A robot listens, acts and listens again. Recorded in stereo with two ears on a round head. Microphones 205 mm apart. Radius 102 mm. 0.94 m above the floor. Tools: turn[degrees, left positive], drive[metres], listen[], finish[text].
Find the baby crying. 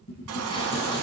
Action: turn[-90]
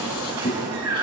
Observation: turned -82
Thought: So it is at 20° right.
Action: turn[-20]
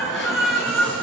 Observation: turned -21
Action: finish[Found it: a baby crying, straight ahead.]